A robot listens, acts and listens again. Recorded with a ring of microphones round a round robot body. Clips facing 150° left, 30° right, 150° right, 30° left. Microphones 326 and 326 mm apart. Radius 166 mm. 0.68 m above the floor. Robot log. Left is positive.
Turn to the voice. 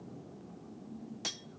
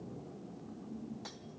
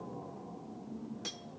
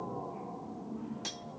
cmd idle
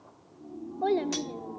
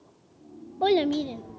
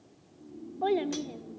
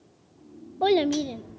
end: Facing the child speaking.